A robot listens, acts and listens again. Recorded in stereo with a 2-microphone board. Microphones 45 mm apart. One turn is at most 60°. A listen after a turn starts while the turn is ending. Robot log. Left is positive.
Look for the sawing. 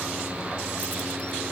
cmd idle
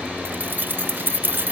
cmd idle
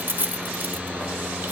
end: I can't make out sawing, only keys jangling.